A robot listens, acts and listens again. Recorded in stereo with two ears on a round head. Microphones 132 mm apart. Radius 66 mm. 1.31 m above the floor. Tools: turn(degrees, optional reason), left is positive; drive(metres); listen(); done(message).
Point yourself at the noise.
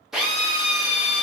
turn(degrees=-30)
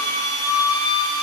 turn(degrees=25, reason="So it is at 25° left.")
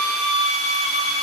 done("Facing the drill, under 1 m away.")